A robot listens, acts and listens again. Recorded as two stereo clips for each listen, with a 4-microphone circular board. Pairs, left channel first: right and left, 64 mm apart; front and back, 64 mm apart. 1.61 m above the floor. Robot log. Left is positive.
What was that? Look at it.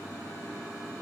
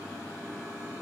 cmd idle
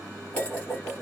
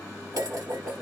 note: The dishes clattering: 155° right.
cmd yaw -155
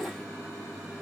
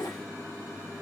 end: Found it: dishes clattering, straight ahead, 2 to 4 m away.